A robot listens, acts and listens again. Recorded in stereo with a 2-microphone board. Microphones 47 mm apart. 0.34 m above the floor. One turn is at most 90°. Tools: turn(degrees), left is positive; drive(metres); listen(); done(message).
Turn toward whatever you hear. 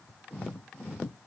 listen()
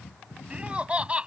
turn(degrees=-25)
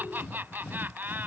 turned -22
turn(degrees=-90)
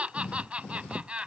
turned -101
turn(degrees=-30)
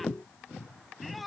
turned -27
done("Found it: laughter, straight ahead.")